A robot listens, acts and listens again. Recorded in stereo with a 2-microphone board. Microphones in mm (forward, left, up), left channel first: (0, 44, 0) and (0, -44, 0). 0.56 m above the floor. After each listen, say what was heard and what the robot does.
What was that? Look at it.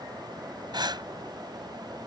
The breathing: about 60° right or 120° right. Turn 60° right.
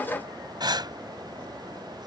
So it is at 60° right. Turn 60° right.
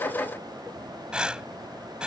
The breathing is now 10° right. Turn 10° right.
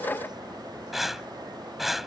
Facing the breathing.